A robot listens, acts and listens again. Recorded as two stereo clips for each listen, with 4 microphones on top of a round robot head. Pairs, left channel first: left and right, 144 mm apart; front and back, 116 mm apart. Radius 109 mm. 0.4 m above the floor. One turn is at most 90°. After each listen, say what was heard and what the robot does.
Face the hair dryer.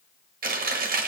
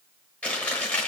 Keep listening.
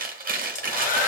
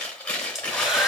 The hair dryer: 95° left. Turn 90° left.
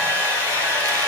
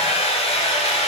The hair dryer is now 20° left. Turn 20° left.
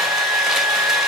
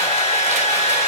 Found it: a hair dryer, straight ahead.